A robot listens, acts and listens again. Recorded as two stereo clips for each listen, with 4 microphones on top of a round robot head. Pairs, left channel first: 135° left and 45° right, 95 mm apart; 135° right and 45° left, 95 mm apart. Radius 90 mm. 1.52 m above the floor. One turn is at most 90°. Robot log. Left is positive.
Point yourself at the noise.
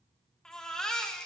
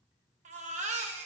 note: The baby crying: 50° left.
cmd yaw +50
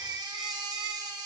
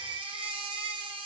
end: Facing the baby crying, 1 to 2 m away.